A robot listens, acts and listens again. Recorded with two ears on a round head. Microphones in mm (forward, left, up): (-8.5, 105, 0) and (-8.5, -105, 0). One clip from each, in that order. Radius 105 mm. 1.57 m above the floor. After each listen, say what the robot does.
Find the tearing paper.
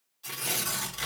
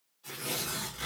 Turn 55° left.
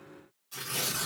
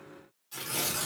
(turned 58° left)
Facing the tearing paper.